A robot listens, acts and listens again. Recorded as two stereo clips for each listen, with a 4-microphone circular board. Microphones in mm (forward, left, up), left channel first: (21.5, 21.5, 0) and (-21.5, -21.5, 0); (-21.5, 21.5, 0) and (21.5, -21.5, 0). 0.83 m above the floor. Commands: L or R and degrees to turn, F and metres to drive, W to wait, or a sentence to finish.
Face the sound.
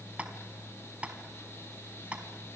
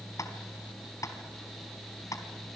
L155
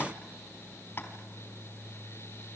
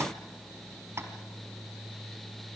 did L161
W
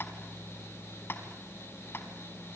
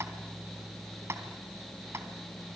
Facing the tapping.